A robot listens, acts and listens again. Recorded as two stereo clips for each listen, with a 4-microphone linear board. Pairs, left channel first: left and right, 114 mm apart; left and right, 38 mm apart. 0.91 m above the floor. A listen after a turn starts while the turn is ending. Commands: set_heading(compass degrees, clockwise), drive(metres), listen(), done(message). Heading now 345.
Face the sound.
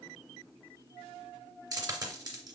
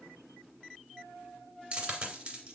set_heading(15)
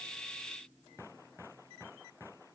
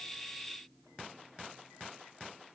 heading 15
listen()
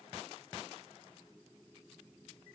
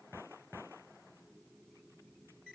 done("I heard a dropped coin, but can't make it out now. It was about straight ahead or 120° right.")